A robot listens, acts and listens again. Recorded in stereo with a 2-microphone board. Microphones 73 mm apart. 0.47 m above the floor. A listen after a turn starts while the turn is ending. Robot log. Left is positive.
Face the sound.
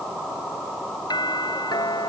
note: The doorbell: about 75° left or 105° left.
cmd yaw +75
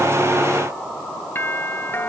note: So it is at 30° left.
cmd yaw +30
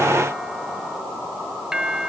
note: The doorbell is now 10° right.
cmd yaw -10
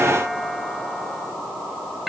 end: Found it: a doorbell, straight ahead.